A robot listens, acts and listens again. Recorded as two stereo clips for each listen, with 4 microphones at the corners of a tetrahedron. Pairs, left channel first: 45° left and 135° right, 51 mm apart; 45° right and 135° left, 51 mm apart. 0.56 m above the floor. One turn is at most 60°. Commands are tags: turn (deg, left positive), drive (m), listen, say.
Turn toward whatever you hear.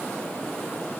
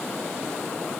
<listen/>
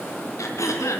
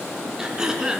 <turn deg="60"/>
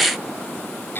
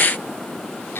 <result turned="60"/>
<say>Facing the throat clearing.</say>